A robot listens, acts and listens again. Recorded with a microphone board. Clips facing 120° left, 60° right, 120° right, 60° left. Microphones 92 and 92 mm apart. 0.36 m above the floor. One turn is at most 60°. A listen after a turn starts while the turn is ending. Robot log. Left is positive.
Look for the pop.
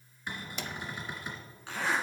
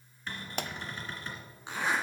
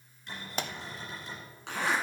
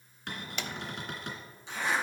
note: The pop: 75° right.
cmd yaw -60
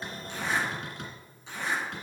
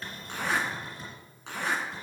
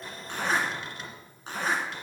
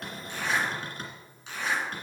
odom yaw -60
note: Nothing new. It was at 15° right.
cmd yaw -15
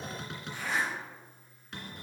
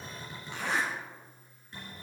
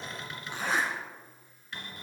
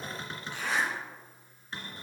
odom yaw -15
end: I heard a pop from this way, but can't make it out now.